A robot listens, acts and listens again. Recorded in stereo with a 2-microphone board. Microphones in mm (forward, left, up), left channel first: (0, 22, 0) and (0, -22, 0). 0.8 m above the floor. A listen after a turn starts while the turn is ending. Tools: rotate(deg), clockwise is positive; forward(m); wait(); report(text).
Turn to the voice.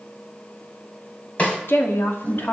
rotate(-55)
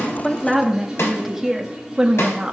rotate(20)
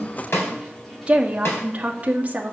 rotate(35)
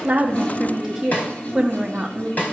rotate(10)
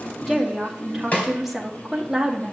report("Found it: a woman speaking, straight ahead.")